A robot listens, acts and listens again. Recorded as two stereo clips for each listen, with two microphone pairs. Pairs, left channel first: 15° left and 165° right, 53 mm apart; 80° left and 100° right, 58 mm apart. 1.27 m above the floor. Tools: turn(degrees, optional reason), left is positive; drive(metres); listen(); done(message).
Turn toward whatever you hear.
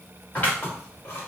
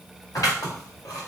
turn(degrees=75, reason="The scissors: 75° left.")
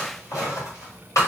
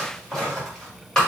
done("Found it: scissors, straight ahead, 2 to 4 m away.")